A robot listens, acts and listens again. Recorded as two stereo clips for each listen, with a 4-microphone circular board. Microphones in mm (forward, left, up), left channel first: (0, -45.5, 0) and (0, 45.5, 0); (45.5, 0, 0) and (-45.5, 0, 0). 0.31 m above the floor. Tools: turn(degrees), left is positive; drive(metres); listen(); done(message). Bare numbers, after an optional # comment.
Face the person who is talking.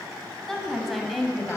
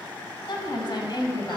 done("Facing the woman speaking.")